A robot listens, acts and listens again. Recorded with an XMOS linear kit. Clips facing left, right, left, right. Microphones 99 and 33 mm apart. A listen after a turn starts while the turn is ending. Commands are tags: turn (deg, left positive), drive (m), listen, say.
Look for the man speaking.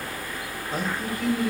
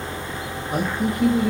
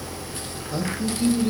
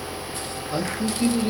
<turn deg="-20"/>
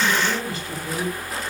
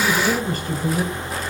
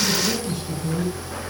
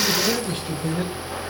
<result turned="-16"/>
<turn deg="-130"/>
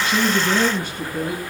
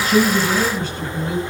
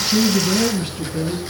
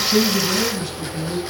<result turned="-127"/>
<turn deg="20"/>
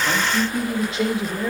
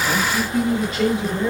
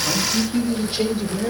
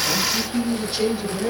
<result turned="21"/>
<say>Facing the man speaking.</say>